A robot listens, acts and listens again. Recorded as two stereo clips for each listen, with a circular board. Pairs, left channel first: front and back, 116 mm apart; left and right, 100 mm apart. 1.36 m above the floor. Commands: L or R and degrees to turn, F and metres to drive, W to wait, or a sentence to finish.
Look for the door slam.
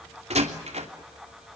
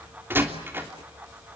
R155
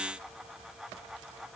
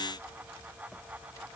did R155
Facing where the door slam came from. I can't hear it now.